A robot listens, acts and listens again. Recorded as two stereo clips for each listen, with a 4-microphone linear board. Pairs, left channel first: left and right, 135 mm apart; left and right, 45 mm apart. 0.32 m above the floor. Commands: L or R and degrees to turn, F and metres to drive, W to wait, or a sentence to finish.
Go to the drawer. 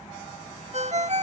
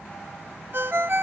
W
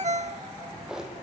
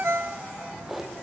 R30
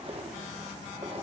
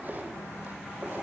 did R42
R135
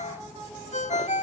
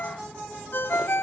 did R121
R15
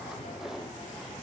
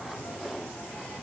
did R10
W
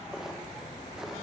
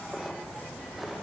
I heard a drawer from this way, but can't make it out now. I did not reach it.